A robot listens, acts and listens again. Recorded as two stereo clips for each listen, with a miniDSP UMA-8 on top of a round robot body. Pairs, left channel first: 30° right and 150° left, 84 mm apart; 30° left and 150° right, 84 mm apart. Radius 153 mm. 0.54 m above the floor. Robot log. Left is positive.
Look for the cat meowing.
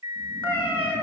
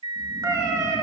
note: The cat meowing: 95° right.
cmd yaw -95
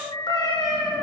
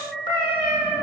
end: Found it: a cat meowing, straight ahead.